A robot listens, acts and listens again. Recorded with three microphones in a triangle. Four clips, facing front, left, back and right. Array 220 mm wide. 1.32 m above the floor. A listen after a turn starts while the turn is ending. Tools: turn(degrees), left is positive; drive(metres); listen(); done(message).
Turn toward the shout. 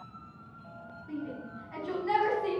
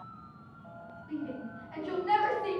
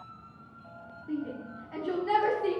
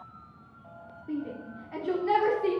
turn(degrees=-115)
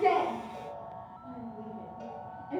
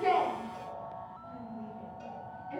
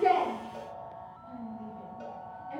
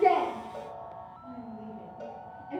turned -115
turn(degrees=-25)
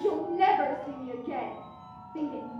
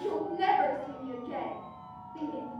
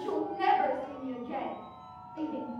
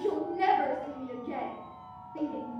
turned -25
done("Found it: a shout, straight ahead.")